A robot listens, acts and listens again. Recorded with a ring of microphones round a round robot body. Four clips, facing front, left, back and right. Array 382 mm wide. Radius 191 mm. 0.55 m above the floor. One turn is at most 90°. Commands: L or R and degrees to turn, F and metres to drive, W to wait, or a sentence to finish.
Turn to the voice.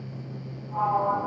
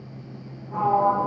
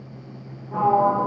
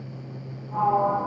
W
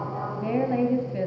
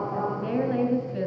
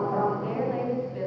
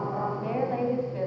L35
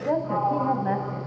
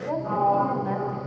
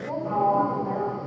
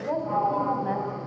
Found it: a woman speaking, straight ahead, 2 to 4 m away.